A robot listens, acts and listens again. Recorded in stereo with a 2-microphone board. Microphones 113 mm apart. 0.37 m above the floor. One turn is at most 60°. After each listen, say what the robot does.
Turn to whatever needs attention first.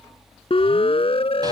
Turn 60° left.
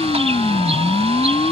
Turn 60° left.
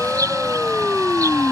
Turn 15° left.
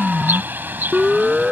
Found it: a siren, straight ahead.